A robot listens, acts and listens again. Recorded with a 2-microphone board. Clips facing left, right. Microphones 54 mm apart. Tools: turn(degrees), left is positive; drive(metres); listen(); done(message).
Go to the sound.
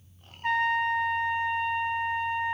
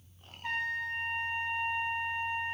turn(degrees=45)
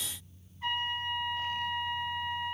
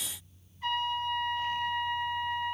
drive(metres=1.0)
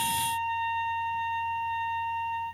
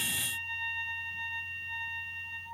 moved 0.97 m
drive(metres=1.0)
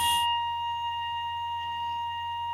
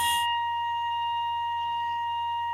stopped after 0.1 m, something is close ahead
done("Arrived at the trumpet, straight ahead.")